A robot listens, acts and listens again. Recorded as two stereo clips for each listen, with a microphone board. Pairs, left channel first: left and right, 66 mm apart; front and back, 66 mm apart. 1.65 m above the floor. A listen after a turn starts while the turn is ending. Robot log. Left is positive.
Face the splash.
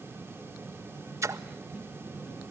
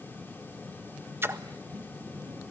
note: The splash: 125° right.
cmd yaw -125
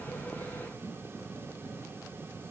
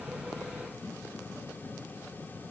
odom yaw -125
end: I heard a splash from this way, but can't make it out now.